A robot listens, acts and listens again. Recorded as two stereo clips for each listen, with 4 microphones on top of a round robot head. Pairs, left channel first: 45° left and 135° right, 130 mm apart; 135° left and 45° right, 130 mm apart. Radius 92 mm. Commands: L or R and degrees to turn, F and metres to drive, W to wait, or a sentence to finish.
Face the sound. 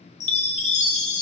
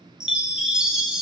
L35
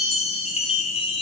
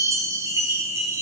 L15
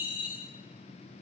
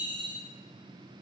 Facing the chime.